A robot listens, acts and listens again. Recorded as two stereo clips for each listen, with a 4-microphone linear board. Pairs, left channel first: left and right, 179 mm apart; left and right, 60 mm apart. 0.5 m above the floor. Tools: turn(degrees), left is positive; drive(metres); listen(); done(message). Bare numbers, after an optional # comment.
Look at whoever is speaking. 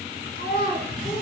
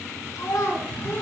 # The child speaking: about 60° left or 120° left.
turn(60)
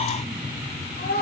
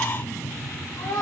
# So it is at 70° left.
turn(70)
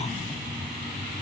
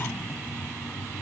listen()
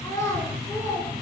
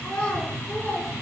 # The child speaking is now 20° left.
turn(20)
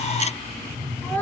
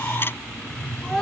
done("Facing the child speaking.")